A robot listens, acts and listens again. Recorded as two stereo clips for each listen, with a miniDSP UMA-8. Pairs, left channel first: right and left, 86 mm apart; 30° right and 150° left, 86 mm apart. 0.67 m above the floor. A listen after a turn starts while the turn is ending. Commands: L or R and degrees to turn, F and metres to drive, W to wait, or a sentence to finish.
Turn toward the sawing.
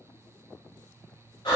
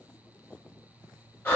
W
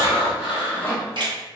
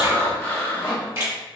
R30
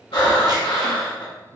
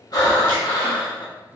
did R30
W
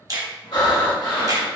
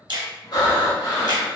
W
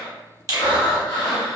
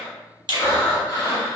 Facing where the sawing came from. I can't hear it now.